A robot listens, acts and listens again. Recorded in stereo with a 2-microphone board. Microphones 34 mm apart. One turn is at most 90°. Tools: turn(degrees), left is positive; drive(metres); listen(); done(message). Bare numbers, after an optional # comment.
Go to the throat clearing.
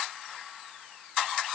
listen()
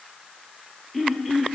turn(-30)
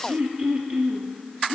# So it is at 145° right.
turn(-90)
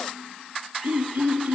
# The throat clearing is now 80° right.
turn(-80)
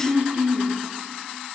# The throat clearing is now 20° right.
turn(-20)
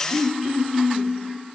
drive(1.0)
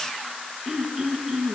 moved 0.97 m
# The throat clearing is now 15° right.
turn(-15)
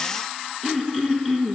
drive(1.0)
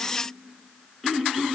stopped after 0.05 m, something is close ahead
done("I am next to the throat clearing.")